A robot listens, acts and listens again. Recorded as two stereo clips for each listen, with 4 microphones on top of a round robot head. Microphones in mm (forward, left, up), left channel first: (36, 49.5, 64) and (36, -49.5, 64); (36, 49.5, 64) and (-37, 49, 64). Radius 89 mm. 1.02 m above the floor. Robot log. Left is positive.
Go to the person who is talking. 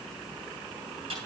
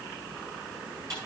cmd idle
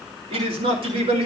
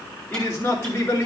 note: The man speaking: 70° right.
cmd yaw -70
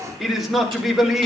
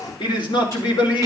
cmd fwd 1.0
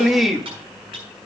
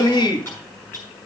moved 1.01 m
cmd fwd 1.0
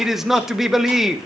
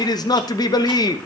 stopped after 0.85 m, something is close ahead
end: I am next to the man speaking.